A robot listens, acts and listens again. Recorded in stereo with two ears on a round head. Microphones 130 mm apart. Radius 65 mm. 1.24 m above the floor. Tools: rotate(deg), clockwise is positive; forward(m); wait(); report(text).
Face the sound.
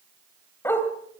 rotate(-15)
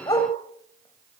rotate(-155)
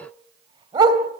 rotate(30)
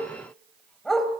report("Found it: a dog barking, straight ahead, 2 to 4 m away.")